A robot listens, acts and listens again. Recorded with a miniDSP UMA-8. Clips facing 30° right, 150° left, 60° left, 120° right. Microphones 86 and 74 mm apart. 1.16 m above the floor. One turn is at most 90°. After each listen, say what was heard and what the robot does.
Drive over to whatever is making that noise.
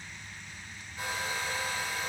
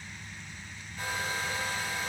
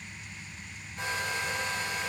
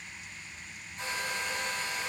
The hair dryer: 50° left. Turn 50° left.
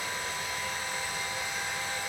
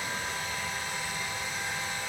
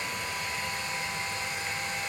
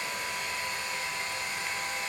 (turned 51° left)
Drive 1.0 m forward.
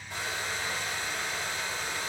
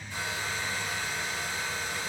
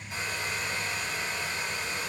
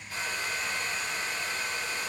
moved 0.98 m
The hair dryer is now 10° right. Turn 10° right.
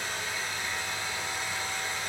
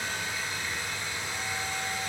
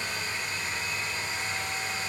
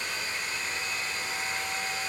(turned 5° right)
Drive 1.0 m forward.
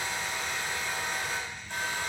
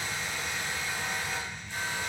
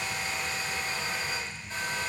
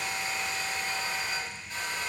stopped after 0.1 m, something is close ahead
I am next to the hair dryer.